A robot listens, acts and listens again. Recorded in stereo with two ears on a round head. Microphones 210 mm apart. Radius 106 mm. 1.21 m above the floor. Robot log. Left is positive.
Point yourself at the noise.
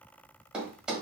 cmd yaw -30
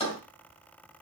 note: So it is at 30° left.
cmd yaw +30
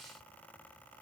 end: Facing where the thud came from. I can't hear it now.